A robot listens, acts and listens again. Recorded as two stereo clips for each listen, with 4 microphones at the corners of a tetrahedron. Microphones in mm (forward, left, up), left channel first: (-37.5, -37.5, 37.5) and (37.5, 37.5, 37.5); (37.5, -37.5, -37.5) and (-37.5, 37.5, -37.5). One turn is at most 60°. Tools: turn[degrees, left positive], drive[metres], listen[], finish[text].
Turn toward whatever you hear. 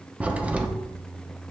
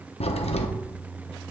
Thought: The crack: 30° right.
Action: turn[-30]
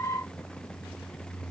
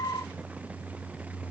Action: finish[Facing where the crack came from. I can't hear it now.]